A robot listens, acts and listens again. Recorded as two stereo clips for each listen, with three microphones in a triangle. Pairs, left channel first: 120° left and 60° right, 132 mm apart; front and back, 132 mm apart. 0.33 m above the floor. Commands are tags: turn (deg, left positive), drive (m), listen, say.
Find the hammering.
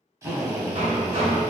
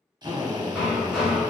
<turn deg="-95"/>
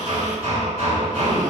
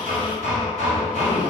<turn deg="-20"/>
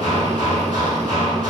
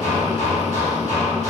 <say>Facing the hammering.</say>